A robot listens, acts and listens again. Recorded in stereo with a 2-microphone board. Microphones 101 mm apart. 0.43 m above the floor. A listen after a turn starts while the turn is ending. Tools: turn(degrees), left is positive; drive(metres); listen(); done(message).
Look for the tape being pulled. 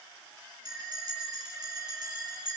listen()
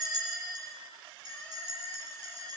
listen()
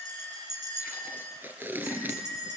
turn(degrees=-20)
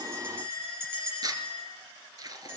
turn(degrees=-140)
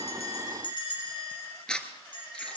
turn(degrees=10)
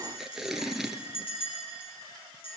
done("Found it: tape being pulled, straight ahead, 1 to 2 m away.")